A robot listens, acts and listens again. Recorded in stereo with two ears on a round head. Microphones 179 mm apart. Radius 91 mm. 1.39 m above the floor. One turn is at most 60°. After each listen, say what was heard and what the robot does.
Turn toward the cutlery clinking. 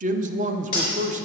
The cutlery clinking: about 25° left or 155° left. Turn 25° left.
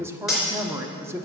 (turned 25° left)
Found it: cutlery clinking, straight ahead.